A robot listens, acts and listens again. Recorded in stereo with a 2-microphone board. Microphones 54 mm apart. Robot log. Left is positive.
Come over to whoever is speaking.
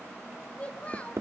note: The child speaking: about 25° left or 155° left.
cmd yaw +25
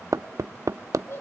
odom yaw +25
note: So it is at 130° left.
cmd yaw +130
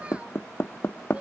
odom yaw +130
cmd idle
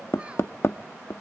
cmd idle
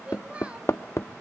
note: The child speaking is now 25° right.
cmd yaw -25
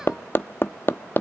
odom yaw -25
cmd idle
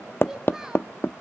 note: The child speaking is now 10° right.
cmd yaw -10
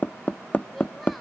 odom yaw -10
cmd idle
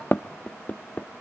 cmd idle
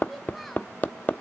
end: I heard a child speaking from this way, but can't make it out now. I did not reach it.